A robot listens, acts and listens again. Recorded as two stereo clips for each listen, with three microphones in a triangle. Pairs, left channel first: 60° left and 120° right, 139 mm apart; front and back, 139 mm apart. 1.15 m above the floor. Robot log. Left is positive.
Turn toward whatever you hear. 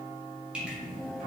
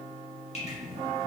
cmd idle
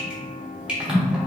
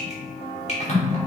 note: The dripping: 35° right.
cmd yaw -35
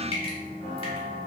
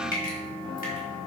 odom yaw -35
note: The dripping is now 10° left.
cmd yaw +10
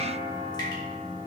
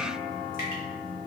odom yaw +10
cmd idle
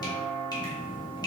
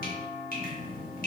end: Facing the dripping.